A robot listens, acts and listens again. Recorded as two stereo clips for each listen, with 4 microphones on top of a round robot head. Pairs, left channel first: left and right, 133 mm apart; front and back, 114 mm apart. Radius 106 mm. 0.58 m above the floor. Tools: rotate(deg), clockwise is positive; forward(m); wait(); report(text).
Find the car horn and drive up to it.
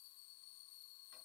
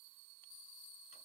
wait()
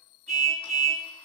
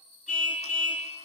rotate(45)
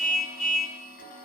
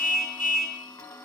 forward(1.0)
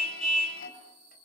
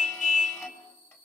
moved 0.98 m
forward(1.0)
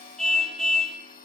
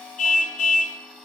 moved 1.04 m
forward(1.0)
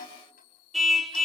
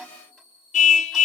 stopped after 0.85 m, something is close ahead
report("Arrived at the car horn, straight ahead.")